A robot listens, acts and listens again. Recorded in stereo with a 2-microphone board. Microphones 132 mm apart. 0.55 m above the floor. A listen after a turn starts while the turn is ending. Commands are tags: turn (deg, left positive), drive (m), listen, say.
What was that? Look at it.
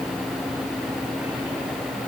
<listen/>
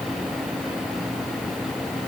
<listen/>
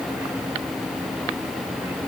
<say>I can't make out anything to turn to.</say>